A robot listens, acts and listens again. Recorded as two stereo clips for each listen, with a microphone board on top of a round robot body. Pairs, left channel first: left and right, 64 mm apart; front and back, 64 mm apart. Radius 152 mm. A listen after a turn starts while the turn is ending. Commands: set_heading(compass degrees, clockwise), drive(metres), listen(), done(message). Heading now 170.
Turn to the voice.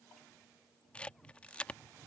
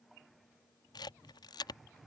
listen()
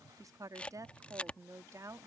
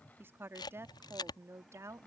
set_heading(305)
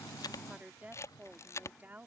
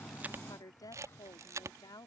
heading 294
set_heading(319)
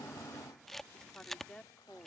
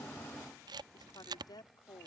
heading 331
set_heading(321)
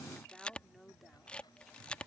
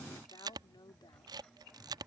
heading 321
done("Facing the woman speaking.")